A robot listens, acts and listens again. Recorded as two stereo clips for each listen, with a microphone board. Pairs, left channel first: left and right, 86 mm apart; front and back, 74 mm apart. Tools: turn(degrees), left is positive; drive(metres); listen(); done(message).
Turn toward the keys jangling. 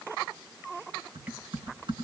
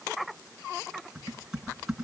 listen()
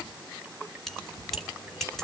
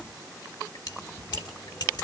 done("Found it: keys jangling, straight ahead.")